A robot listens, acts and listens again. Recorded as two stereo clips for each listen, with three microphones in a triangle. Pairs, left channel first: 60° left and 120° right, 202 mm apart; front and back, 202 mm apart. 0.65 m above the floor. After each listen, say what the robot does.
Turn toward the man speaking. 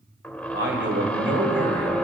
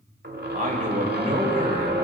Turn 130° right.
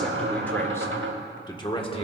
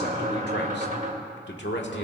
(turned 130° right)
Found it: a man speaking, straight ahead, 1 to 2 m away.